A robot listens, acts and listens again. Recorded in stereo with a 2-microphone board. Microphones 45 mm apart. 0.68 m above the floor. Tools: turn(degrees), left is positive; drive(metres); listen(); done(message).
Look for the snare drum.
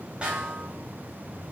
turn(degrees=-25)
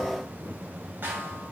turn(degrees=-130)
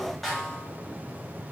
done("Facing the snare drum, 1 to 2 m away.")